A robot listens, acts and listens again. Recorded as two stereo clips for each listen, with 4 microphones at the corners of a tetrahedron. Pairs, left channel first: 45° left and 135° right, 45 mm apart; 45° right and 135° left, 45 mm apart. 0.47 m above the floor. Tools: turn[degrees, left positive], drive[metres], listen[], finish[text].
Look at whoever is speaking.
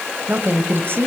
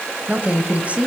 Thought: The woman speaking: 165° right.
Action: turn[-165]
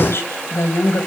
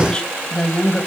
Thought: The woman speaking is now 30° left.
Action: turn[30]
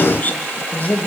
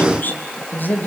Action: finish[Found it: a woman speaking, straight ahead, 2 to 4 m away.]